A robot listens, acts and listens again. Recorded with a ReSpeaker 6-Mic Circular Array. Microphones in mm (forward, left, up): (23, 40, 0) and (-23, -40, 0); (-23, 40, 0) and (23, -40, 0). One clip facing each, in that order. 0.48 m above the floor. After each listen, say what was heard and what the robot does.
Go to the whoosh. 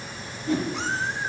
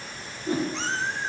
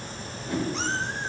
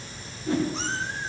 The whoosh: 80° right. Turn 80° right.
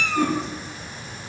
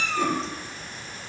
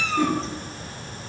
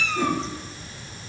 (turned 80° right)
Keep listening.
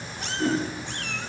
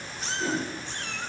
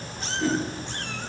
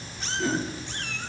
The whoosh is now 10° left. Turn 10° left.
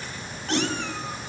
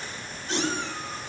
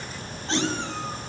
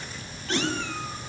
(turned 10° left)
Keep listening.
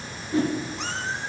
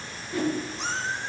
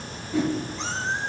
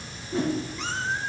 Drive 1.0 m forward.
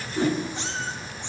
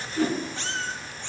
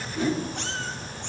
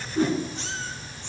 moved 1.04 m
The whoosh is now 10° right. Turn 10° right.
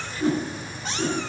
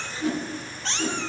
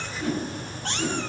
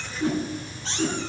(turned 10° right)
Drive 1.0 m forward.
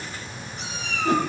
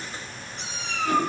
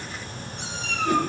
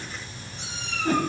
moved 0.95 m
Keep listening.
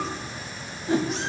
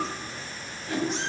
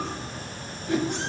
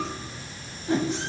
Drive 1.0 m forward.
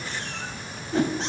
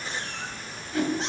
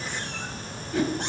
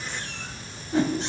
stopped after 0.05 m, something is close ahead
Arrived at the whoosh, straight ahead.